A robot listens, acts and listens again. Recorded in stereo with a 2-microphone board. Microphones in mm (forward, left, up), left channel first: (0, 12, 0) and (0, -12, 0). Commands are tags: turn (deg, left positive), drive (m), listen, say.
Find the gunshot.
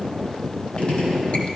<turn deg="50"/>
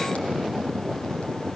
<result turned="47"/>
<listen/>
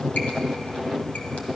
<say>I heard a gunshot, but can't make it out now. It was about 5° left or 80° left.</say>